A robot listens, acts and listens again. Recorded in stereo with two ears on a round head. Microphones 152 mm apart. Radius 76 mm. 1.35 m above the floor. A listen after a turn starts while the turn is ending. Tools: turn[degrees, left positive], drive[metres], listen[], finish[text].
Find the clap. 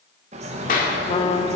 Thought: The clap: about 50° left or 130° left.
Action: turn[50]
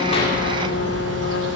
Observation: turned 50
Action: listen[]
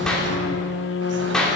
Action: finish[Found it: a clap, straight ahead, 2 to 4 m away.]